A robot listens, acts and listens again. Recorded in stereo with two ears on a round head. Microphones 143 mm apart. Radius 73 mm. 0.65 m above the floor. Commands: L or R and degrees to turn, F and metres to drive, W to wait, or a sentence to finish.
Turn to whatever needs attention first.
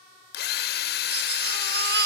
R70
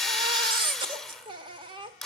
R30
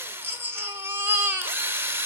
R15
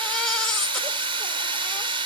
W
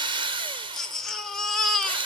Found it: a baby crying, straight ahead, 1 to 2 m away.